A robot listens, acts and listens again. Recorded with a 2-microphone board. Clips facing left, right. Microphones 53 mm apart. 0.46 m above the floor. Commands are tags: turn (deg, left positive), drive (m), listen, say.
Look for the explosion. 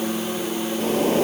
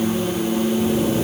<listen/>
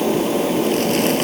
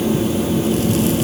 <listen/>
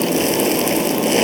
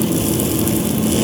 <say>I can't make out an explosion to turn to.</say>